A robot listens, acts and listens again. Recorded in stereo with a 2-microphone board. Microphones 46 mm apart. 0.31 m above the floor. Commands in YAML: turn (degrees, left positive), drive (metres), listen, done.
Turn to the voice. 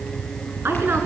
turn: -55
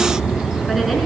listen: true
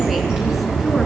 listen: true
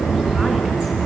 done: "I heard a woman speaking, but can't make it out now. It was about straight ahead or 70° right."